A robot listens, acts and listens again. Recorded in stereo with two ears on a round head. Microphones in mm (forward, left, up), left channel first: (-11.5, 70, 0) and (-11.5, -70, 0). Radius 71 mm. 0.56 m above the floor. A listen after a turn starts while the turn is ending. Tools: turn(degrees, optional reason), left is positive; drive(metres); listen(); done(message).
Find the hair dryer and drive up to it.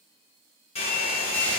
turn(degrees=40, reason="The hair dryer: about 40° left or 140° left.")
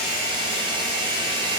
turn(degrees=100, reason="So it is at 100° left.")
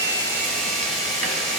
listen()
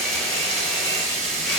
listen()
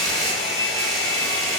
drive(metres=1.0)
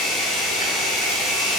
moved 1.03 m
drive(metres=1.0)
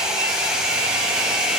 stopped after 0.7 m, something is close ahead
done("Arrived at the hair dryer, straight ahead.")